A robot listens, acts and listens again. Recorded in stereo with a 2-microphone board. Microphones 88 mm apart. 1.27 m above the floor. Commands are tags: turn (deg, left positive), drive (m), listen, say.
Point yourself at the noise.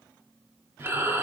<turn deg="-30"/>
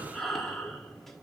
<say>Facing the breathing.</say>